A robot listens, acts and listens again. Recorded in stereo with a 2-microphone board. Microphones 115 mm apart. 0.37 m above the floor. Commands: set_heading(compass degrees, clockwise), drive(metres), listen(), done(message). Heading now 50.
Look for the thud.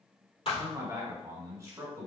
set_heading(350)
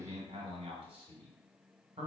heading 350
listen()
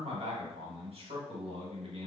done("I heard a thud, but can't make it out now. It was about straight ahead or 60° left.")